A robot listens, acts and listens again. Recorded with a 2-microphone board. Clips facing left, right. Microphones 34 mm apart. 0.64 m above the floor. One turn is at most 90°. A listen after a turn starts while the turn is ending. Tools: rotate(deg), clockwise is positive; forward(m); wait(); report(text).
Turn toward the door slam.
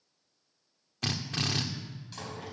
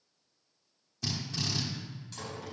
rotate(-30)
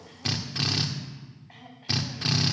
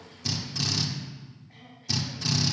wait()
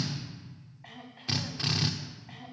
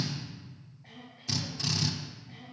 report("I heard a door slam, but can't make it out now. It was about 15° right or 135° left.")